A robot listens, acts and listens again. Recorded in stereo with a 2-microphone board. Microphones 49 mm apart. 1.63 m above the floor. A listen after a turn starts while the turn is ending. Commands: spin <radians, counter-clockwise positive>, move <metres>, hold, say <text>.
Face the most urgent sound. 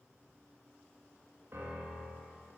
hold
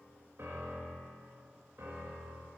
hold
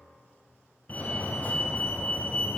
spin 0.61
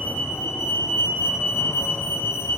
spin 1.83
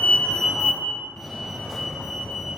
say Facing the fire alarm, under 1 m away.